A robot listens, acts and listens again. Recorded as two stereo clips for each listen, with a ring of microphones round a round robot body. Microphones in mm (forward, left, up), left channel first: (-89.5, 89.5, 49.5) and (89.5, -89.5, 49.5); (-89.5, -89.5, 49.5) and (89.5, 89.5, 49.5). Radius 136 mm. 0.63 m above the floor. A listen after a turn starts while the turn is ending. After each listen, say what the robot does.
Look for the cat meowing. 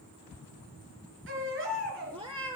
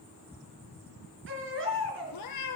Turn 115° right.
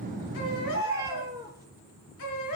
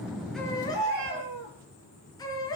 Turn 35° left.
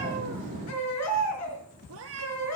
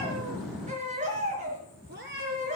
Found it: a cat meowing, straight ahead, 2 to 4 m away.